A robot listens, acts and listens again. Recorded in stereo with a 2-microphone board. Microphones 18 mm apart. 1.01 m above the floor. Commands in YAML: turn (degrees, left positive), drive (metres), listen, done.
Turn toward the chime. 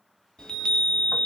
turn: 50
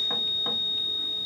turn: 10
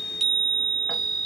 done: "Found it: a chime, straight ahead, under 1 m away."